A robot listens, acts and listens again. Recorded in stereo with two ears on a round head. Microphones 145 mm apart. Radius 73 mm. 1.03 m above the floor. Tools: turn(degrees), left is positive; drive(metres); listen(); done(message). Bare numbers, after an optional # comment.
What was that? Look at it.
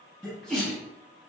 turn(30)
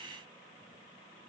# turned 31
listen()
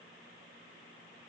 done("I heard a sneeze, but can't make it out now. It was about 30° right or 145° left.")